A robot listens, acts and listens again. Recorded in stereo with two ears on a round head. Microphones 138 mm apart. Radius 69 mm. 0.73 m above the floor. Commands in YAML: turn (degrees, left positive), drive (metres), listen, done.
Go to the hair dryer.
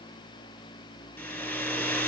turn: 30
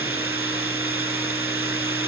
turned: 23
turn: -15
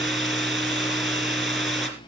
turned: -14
drive: 1.0
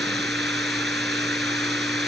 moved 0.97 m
drive: 1.0
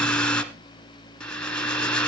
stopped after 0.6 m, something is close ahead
done: "I am next to the hair dryer."